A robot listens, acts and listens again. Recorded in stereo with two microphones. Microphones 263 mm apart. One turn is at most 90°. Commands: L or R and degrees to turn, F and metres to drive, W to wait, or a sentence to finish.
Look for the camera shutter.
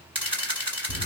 R20
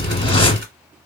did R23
W
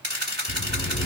R90
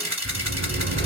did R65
R70
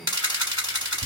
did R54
R15
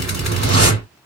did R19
W
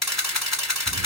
Found it: a camera shutter, straight ahead.